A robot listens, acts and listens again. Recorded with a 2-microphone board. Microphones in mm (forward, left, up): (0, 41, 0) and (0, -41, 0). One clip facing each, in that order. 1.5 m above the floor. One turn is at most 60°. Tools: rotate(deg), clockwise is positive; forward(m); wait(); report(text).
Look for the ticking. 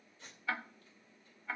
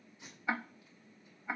rotate(20)
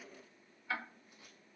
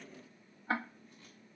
rotate(60)
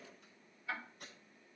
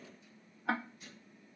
rotate(60)
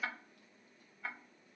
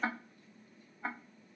rotate(40)
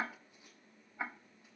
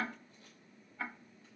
rotate(-20)
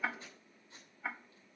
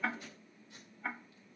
report("Facing the ticking.")